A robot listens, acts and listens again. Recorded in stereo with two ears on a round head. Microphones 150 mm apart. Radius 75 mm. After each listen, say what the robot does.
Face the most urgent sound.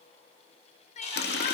Turn 45° left.
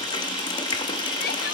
Keep listening.
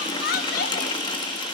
Turn 85° left.
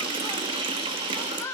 Turn 20° left.
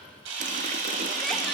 Keep listening.
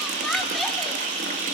Keep listening.
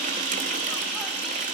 Facing where the crying came from. I can't hear it now.